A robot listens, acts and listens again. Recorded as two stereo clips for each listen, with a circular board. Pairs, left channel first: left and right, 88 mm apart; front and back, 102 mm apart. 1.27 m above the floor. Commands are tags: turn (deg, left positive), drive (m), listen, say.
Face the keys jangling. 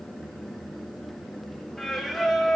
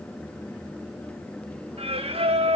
<listen/>
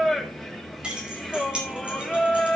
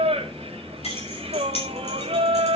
<turn deg="-15"/>
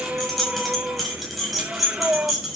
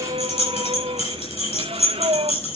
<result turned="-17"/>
<say>Facing the keys jangling, over 4 m away.</say>